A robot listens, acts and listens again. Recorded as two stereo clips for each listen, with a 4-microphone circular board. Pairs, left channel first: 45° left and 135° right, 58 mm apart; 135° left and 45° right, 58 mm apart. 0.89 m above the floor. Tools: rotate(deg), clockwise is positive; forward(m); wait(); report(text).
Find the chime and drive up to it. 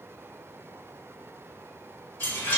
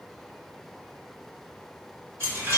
forward(1.0)
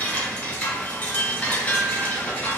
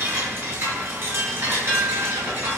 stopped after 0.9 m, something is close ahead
rotate(10)
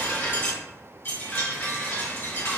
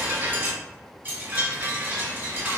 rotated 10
report("I am next to the chime.")